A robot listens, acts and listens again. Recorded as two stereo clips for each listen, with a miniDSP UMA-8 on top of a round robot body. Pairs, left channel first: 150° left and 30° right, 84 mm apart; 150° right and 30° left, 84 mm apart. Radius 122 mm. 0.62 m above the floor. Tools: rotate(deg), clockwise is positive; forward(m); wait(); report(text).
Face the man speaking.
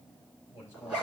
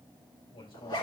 rotate(145)
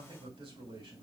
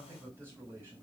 rotate(35)
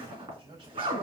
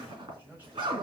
rotate(40)
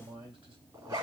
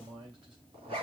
report("Facing the man speaking, 2 to 4 m away.")